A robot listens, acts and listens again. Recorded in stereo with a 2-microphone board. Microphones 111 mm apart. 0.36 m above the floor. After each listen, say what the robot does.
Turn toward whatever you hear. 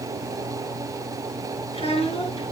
Turn 75° left.
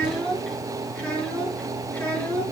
Turn 15° left.
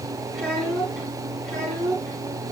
Turn 10° left.
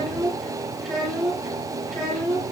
Facing the child speaking.